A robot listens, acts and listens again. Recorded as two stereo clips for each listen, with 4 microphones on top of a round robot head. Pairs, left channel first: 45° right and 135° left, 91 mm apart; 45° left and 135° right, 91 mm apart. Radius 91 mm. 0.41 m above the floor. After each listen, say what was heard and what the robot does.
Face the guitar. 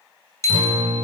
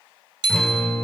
The guitar: 125° left. Turn 125° left.
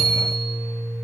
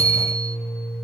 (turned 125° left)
The guitar is now 30° left. Turn 30° left.
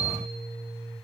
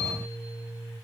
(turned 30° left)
The guitar is now 15° right. Turn 15° right.
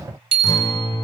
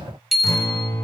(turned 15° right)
Found it: a guitar, straight ahead.